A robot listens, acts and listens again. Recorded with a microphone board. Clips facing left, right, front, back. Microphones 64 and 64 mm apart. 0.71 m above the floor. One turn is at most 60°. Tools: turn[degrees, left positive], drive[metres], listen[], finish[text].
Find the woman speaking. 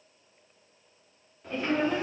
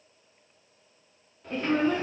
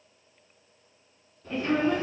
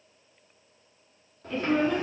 Thought: The woman speaking: 60° right.
Action: turn[-60]
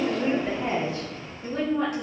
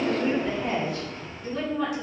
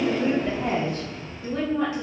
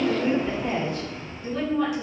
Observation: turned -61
Thought: The woman speaking is now 55° left.
Action: turn[55]
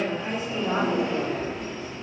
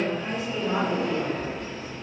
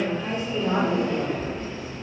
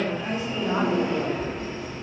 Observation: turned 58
Thought: The woman speaking is now 15° left.
Action: turn[15]
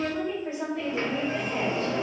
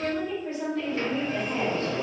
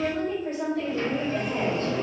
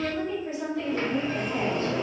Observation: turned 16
Thought: The woman speaking is now 15° left.
Action: turn[15]
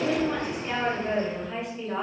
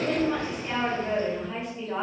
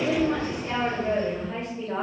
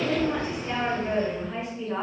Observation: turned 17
Action: finish[Facing the woman speaking.]